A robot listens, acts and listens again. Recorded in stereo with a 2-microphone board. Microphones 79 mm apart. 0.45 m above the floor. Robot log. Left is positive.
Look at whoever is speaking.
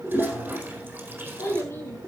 note: The child speaking: about 35° left or 145° left.
cmd yaw +35
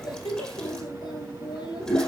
note: So it is at 115° left.
cmd yaw +115
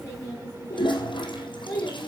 note: The child speaking is now 30° left.
cmd yaw +30
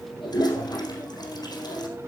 cmd idle
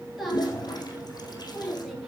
end: Facing the child speaking, over 4 m away.